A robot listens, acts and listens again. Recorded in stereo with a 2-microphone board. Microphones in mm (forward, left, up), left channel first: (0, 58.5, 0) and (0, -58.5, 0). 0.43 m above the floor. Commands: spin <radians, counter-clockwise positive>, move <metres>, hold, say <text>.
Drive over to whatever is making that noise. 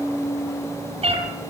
spin -0.96
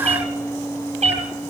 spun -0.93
spin -1.22
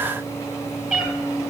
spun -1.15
spin -0.17
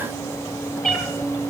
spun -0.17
move 1.0
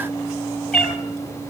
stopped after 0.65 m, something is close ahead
say Something is in my way. I am facing the cat meowing but have not reached it.